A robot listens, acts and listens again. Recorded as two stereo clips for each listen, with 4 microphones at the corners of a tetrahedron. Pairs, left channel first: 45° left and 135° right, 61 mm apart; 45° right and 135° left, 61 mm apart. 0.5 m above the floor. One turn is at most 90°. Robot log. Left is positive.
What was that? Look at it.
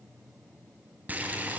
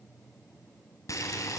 note: The boiling: 75° right.
cmd yaw -75
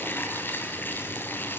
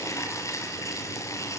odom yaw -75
note: The boiling is now 10° right.
cmd yaw -10
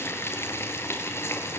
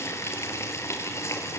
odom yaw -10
end: Found it: boiling, straight ahead.